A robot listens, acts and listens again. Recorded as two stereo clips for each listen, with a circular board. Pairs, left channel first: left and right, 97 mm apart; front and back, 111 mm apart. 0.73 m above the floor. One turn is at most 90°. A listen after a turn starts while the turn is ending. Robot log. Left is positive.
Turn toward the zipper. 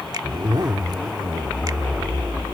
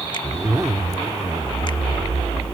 note: The zipper: 125° right.
cmd yaw -90
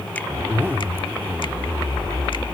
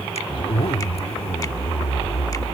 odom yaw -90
note: The zipper is now 25° right.
cmd yaw -25
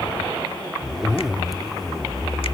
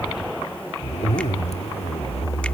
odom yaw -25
end: Facing the zipper.